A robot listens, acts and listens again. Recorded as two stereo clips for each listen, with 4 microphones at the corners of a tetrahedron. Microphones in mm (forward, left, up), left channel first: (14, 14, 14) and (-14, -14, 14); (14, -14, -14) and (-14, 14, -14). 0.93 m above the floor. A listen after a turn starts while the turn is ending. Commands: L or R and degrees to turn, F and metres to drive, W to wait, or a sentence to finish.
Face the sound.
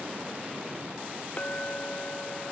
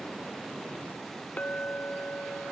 Found it: a clink, straight ahead.